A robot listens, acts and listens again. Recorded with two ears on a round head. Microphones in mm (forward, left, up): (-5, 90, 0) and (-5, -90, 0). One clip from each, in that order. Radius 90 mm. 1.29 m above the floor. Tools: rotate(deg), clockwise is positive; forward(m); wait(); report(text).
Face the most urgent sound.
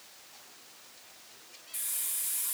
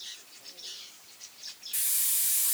wait()
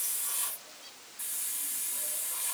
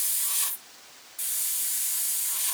wait()
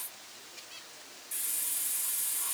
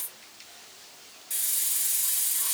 report("I can't make out anything urgent, only a hiss.")